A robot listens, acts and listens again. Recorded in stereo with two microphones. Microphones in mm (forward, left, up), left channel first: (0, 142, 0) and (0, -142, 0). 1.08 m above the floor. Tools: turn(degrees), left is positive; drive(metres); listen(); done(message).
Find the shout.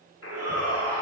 turn(degrees=-60)
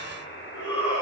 turn(degrees=-55)
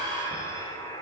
turn(degrees=-20)
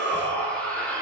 done("Facing the shout.")